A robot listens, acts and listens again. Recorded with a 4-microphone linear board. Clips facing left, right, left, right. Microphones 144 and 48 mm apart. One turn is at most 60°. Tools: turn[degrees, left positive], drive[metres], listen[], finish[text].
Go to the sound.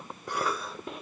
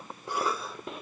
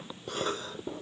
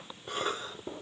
Thought: The cough: about 25° right or 155° right.
Action: turn[-25]
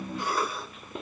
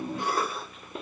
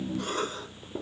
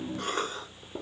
Thought: So it is at 125° right.
Action: turn[-60]
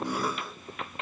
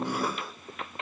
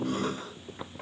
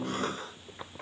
Thought: Nothing new. It was at 65° right.
Action: turn[-60]
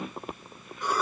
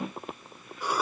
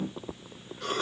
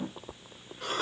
Thought: The cough is now 10° right.
Action: turn[-10]
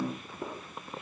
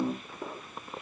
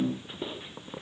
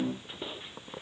Action: listen[]
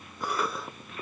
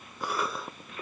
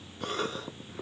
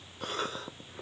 Action: drive[1.0]
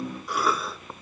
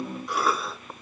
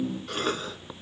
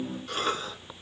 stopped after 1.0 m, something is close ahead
Action: finish[I am next to the cough.]